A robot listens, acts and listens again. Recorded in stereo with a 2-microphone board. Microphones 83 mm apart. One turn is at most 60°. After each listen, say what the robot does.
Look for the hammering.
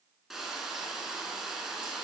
Keep listening.
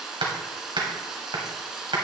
Turn 60° right.
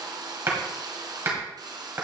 Turn 30° right.
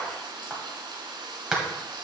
Facing the hammering, 2 to 4 m away.